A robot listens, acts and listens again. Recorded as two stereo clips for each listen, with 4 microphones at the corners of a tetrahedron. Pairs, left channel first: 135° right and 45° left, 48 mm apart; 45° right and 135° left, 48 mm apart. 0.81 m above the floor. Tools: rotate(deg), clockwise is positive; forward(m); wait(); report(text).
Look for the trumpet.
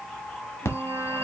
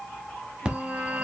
rotate(-25)
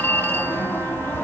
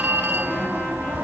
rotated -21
wait()
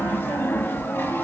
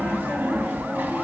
wait()
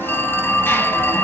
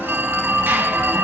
report("Facing where the trumpet came from. I can't hear it now.")